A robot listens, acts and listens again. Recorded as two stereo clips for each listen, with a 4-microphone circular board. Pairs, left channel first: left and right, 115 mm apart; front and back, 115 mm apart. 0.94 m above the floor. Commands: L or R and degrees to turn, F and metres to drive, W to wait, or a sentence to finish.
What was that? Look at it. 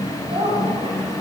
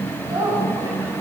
R130
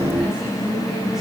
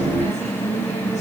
Facing the woman speaking, over 4 m away.